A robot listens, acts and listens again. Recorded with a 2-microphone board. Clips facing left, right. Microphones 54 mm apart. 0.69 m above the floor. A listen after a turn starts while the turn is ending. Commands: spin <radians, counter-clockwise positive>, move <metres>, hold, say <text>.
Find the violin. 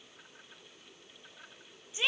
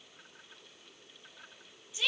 hold
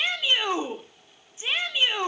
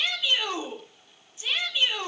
hold
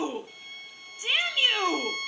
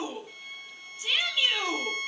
spin -0.52
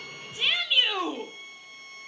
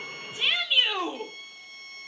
spin 0.44
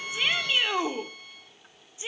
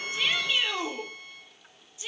say Facing the violin.